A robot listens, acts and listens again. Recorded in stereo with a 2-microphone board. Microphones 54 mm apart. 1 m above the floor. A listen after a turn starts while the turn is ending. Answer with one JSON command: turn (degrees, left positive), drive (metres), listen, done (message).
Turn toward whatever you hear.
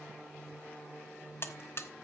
{"turn": 50}
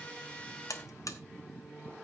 {"turn": 80}
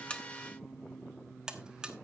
{"turn": -15}
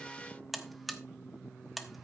{"done": "Found it: a buzzer, straight ahead, 1 to 2 m away."}